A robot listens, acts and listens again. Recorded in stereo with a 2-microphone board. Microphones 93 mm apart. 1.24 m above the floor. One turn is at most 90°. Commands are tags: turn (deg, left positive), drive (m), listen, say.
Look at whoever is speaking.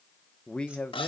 <turn deg="30"/>
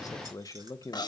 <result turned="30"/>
<turn deg="90"/>
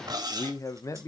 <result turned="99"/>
<turn deg="35"/>
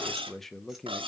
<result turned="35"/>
<say>Facing the man speaking, 1 to 2 m away.</say>